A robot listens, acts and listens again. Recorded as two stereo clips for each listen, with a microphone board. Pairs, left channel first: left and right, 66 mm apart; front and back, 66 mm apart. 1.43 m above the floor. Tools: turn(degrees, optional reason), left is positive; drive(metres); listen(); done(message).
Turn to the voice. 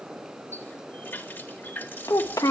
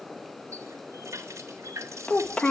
turn(degrees=70, reason="The child speaking: 70° left.")
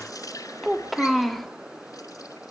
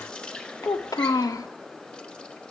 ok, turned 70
done("Found it: a child speaking, straight ahead, 1 to 2 m away.")